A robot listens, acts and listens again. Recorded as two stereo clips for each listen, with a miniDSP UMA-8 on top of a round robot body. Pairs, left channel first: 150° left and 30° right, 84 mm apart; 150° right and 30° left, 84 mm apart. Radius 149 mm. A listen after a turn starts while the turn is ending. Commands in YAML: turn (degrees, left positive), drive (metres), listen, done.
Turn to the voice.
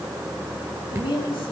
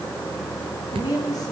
turn: 165
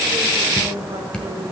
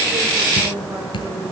listen: true
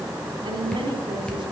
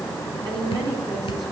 done: "Found it: a woman speaking, straight ahead."